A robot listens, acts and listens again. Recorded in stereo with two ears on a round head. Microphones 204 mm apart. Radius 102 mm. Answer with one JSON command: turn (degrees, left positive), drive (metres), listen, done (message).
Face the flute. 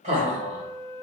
{"turn": 15}
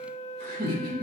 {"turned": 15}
{"turn": 150}
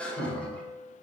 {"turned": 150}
{"turn": 15}
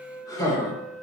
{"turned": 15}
{"done": "Found it: a flute, straight ahead."}